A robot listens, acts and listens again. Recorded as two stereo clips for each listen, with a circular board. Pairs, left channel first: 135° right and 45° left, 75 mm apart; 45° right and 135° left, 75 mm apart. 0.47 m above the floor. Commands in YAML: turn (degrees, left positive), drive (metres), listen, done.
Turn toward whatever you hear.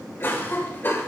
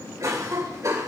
turn: 170
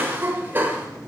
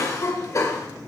turn: -10
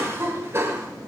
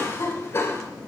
done: "Facing the cough."